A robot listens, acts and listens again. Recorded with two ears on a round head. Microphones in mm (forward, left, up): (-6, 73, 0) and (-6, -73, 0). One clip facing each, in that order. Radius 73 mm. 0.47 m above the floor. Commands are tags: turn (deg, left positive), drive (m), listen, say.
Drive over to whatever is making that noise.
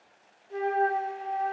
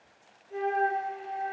<turn deg="40"/>
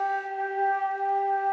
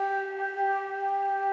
<drive m="1.0"/>
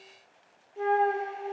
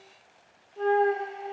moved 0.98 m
<turn deg="10"/>
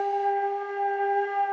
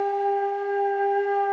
<drive m="1.0"/>
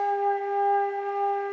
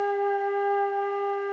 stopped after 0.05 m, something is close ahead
<turn deg="10"/>
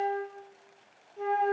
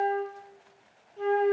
<say>I am next to the flute.</say>